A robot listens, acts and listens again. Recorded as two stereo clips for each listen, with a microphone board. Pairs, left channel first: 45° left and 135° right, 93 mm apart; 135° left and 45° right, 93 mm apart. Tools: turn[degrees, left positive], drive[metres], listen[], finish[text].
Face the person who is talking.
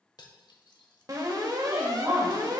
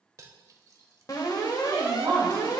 Thought: The woman speaking: 90° right.
Action: turn[-90]
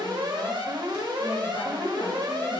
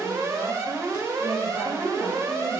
Action: listen[]
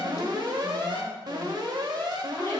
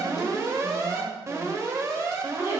Action: listen[]
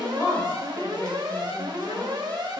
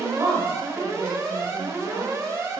Thought: The woman speaking is now 10° right.
Action: turn[-10]
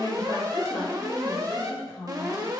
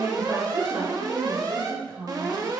Action: finish[Facing the woman speaking.]